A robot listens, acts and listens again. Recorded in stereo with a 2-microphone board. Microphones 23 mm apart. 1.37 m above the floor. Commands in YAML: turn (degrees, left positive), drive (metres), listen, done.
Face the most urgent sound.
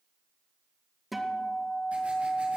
listen: true
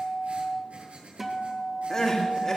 turn: 20
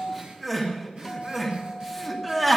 done: "Facing the crying."